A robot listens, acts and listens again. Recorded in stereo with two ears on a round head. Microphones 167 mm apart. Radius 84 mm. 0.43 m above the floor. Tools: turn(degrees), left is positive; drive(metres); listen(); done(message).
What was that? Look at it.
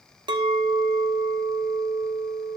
turn(degrees=-25)
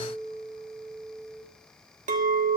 turn(degrees=-130)
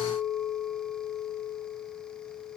done("Found it: a clink, straight ahead, 1 to 2 m away.")